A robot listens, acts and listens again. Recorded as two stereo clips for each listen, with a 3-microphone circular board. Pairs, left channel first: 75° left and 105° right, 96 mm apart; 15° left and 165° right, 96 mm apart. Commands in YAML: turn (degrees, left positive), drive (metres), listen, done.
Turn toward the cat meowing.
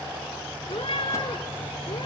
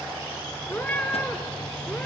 turn: 90
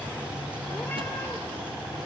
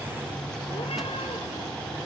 listen: true
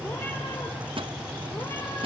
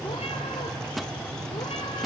listen: true
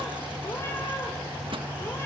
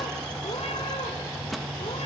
done: "Facing where the cat meowing came from. I can't hear it now."